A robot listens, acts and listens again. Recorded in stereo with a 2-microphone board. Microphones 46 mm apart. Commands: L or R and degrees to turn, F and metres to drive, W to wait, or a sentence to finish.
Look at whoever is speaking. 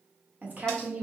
R40
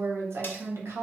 R100
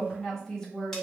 L10
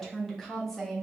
Found it: a woman speaking, straight ahead.